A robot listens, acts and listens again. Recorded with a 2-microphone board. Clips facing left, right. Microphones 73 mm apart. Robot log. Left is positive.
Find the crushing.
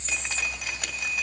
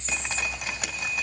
cmd idle
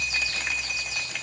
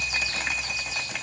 cmd idle
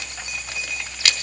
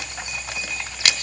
end: I can't make out crushing to turn to.